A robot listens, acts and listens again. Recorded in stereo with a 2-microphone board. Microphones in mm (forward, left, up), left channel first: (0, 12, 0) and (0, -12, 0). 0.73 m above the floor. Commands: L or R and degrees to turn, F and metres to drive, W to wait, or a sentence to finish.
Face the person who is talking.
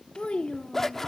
L55
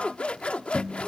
W
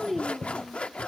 Facing the child speaking, under 1 m away.